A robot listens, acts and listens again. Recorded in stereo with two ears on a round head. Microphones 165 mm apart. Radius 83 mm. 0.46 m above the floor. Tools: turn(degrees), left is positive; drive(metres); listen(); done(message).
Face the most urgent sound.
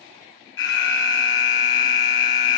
turn(degrees=70)
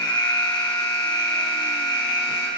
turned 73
turn(degrees=25)
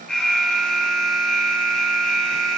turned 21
done("Facing the alarm, 2 to 4 m away.")